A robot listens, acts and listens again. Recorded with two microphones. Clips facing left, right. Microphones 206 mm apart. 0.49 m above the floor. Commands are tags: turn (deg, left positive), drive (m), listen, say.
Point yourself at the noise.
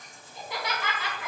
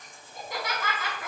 <turn deg="-50"/>
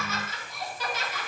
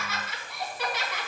<turn deg="-80"/>
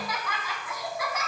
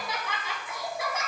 <turn deg="-30"/>
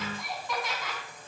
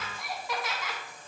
<say>Found it: laughter, straight ahead, 2 to 4 m away.</say>